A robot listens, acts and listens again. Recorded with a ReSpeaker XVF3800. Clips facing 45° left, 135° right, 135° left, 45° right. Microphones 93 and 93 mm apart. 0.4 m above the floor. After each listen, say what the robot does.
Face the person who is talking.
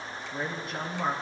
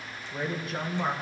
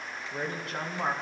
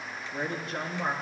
Turn 130° left.
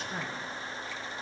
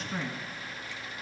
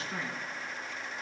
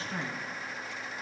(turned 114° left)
Turn 10° left.
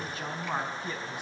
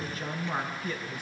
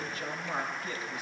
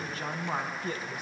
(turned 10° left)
Turn 15° right.
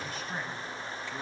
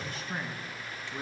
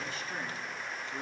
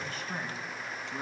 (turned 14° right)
Turn 15° right.
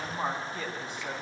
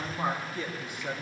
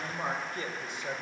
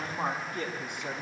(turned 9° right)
Turn 20° right.
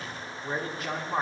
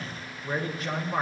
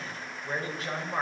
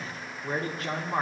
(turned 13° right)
Facing the man speaking.